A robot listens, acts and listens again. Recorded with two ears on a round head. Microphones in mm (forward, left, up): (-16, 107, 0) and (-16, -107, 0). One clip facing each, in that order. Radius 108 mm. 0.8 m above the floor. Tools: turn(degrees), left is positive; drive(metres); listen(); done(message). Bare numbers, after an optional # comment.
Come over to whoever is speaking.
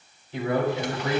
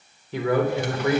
# The man speaking: about 55° right or 125° right.
turn(-55)
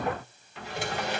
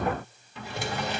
listen()
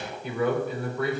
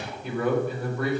drive(1.0)
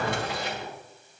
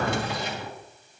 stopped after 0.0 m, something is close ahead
listen()
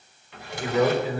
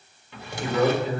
done("Something is in my way. I am facing the man speaking but have not reached it.")